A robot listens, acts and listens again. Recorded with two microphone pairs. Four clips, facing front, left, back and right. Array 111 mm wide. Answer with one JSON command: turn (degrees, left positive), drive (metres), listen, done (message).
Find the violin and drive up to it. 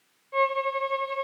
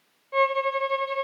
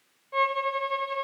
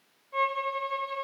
{"turn": 100}
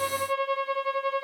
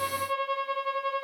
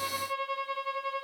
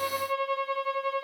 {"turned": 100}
{"turn": -10}
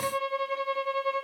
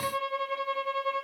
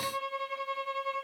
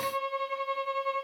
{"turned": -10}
{"drive": 1.0}
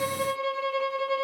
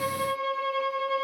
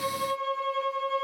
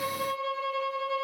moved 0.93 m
{"turn": 10}
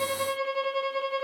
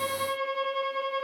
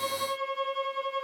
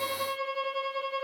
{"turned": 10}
{"drive": 1.0}
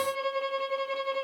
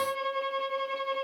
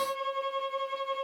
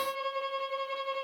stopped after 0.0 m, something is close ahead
{"done": "Arrived at the violin, straight ahead."}